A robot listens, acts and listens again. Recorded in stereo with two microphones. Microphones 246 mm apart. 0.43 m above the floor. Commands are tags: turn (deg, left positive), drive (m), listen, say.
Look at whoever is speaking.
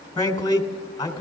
<turn deg="15"/>
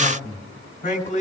<turn deg="150"/>
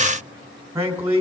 <turn deg="-10"/>
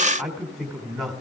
<say>Facing the man speaking, 2 to 4 m away.</say>